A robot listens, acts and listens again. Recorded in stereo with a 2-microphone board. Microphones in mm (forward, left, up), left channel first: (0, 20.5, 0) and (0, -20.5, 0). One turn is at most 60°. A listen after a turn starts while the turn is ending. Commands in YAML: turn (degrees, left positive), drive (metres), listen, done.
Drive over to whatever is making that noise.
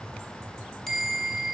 turn: 30
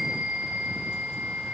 turn: -20
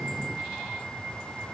drive: 1.0
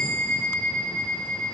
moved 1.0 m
turn: 10
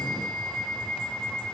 drive: 1.0
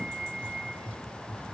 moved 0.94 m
drive: 1.0
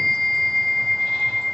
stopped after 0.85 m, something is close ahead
done: "I am next to the bell."